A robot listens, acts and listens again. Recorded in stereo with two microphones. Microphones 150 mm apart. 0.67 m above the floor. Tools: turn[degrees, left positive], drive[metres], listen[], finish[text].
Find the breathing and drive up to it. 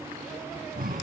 Action: turn[-90]
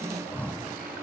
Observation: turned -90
Thought: So it is at 10° left.
Action: turn[10]
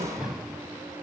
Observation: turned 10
Action: drive[1.0]
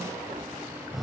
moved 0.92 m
Action: drive[1.0]
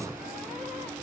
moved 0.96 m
Action: listen[]
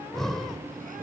Action: drive[1.0]
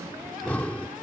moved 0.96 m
Thought: The breathing is now 10° left.
Action: turn[10]
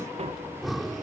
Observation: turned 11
Action: drive[1.0]
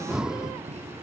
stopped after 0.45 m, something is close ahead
Action: finish[I am next to the breathing.]